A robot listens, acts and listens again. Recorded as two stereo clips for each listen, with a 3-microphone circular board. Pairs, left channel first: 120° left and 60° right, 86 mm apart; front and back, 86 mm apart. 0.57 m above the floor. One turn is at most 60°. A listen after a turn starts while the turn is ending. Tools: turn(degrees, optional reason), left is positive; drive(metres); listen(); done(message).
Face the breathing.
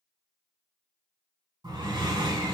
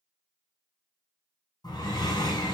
turn(degrees=-35, reason="The breathing: 35° right.")
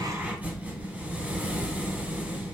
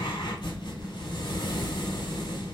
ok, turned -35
turn(degrees=10, reason="The breathing is now 10° left.")
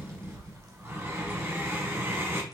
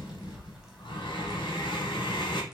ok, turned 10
done("Found it: breathing, straight ahead, under 1 m away.")